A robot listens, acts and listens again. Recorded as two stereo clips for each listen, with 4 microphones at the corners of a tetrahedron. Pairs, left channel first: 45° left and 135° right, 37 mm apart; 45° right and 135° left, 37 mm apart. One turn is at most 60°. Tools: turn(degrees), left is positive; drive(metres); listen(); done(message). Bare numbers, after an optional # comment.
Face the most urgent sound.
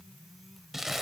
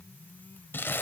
listen()
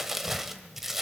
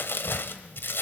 listen()
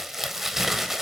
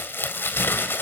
done("I can't make out anything urgent, only crumpling.")